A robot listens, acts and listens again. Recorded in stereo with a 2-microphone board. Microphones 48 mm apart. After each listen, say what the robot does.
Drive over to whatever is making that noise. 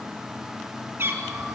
Turn 50° right.
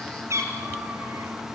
Turn 75° right.
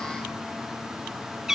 Turn 10° right.
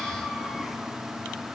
Drive 1.0 m forward.
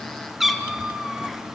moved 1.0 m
Drive 1.0 m forward.
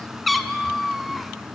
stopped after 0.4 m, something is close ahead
Arrived at the cat meowing, straight ahead.